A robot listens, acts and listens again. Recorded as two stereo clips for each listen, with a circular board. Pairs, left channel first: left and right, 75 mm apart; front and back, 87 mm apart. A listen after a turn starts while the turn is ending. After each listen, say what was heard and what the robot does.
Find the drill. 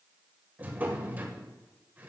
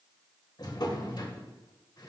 Keep listening.
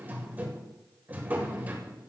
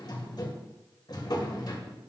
Keep listening.
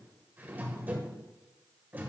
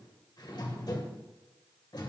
I can't make out a drill, only a drawer.